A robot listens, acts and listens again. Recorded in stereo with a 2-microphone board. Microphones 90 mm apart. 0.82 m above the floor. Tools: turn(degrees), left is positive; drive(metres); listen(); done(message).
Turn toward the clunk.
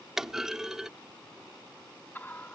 turn(degrees=-30)
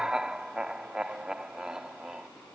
listen()
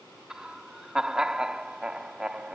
done("I heard a clunk, but can't make it out now. It was about 25° left or 145° right.")